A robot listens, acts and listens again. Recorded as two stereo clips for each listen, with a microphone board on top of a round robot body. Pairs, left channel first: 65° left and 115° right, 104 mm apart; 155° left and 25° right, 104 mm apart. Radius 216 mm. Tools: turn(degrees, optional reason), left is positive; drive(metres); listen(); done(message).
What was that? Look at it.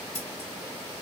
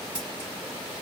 turn(degrees=60, reason="The scissors: 60° left.")
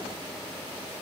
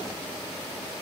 listen()
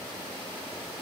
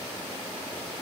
listen()
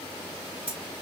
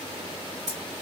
turn(degrees=-15, reason="The scissors is now 15° right.")
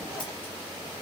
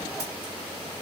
listen()
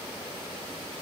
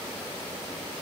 listen()
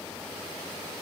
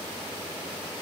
done("Facing where the scissors came from. I can't hear it now.")